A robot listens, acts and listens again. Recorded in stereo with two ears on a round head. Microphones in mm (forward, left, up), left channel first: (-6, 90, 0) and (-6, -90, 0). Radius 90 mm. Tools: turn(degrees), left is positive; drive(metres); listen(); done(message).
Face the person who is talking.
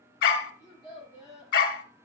turn(degrees=20)
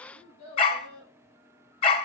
turn(degrees=140)
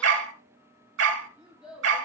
done("Facing the child speaking.")